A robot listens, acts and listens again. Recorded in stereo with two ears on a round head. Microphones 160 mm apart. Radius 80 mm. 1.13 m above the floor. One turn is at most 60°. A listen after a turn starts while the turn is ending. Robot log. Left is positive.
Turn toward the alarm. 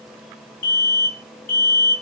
note: The alarm: about 50° left or 130° left.
cmd yaw +50
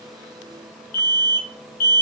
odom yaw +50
note: So it is at 70° left.
cmd yaw +60
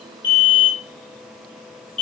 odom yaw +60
end: Found it: an alarm, straight ahead.